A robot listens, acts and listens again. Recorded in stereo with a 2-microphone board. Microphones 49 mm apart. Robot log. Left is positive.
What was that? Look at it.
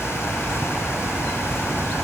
cmd idle
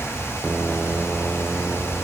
cmd idle
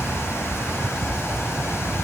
end: I can't make out anything to turn to.